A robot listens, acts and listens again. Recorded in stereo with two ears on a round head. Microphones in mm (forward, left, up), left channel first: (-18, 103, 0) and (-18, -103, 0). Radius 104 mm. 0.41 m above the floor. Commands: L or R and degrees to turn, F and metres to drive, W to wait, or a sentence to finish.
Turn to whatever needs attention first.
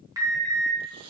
R15
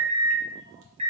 R150
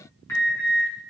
L10
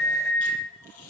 Facing the alarm.